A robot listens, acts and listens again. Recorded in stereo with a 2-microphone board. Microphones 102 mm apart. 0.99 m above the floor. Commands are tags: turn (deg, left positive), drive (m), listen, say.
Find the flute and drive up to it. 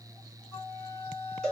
<turn deg="40"/>
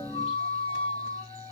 <turn deg="105"/>
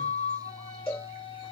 <turn deg="50"/>
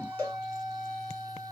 <turn deg="-10"/>
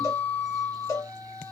<drive m="1.0"/>
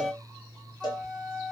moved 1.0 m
<drive m="1.0"/>
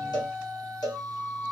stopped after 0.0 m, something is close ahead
<say>Arrived at the flute, straight ahead.</say>